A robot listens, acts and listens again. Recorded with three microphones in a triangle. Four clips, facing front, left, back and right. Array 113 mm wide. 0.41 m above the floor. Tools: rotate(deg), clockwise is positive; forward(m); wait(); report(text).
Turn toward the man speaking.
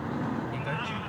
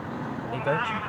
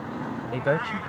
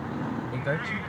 rotate(-165)
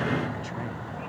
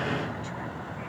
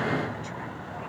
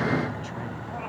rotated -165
wait()
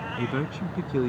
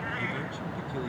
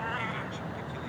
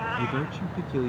rotate(25)
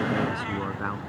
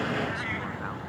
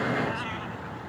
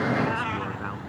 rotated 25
wait()
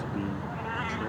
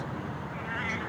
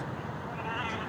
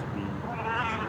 wait()
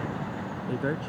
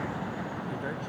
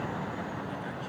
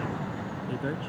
rotate(10)
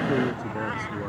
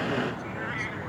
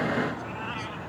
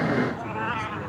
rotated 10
wait()
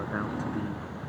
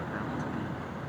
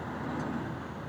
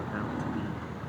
wait()
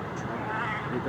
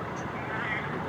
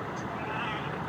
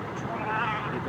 report("Facing where the man speaking came from. I can't hear it now.")